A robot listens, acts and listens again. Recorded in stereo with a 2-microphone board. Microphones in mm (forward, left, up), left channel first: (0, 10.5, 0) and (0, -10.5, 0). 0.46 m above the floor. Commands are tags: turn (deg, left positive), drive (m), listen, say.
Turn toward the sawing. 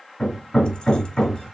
<listen/>
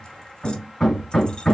<listen/>
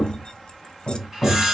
<turn deg="-25"/>
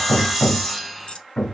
<say>Facing the sawing, 1 to 2 m away.</say>